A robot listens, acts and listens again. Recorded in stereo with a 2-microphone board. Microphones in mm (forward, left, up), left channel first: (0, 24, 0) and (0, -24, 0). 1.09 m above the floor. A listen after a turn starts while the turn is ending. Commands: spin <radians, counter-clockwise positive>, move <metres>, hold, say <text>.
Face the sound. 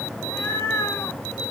spin 1.13
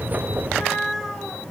say Found it: a cat meowing, straight ahead.